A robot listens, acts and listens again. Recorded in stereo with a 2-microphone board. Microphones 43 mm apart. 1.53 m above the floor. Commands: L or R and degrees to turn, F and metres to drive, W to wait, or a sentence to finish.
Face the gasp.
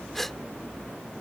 L30
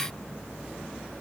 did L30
W
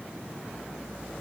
I heard a gasp, but can't make it out now. It was about 20° right or 140° left.